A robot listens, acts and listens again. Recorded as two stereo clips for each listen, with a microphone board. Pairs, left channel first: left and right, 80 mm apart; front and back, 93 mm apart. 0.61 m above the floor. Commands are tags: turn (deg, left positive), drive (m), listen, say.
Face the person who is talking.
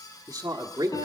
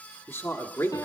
<turn deg="-55"/>
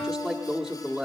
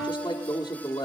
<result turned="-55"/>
<say>Facing the man speaking, 1 to 2 m away.</say>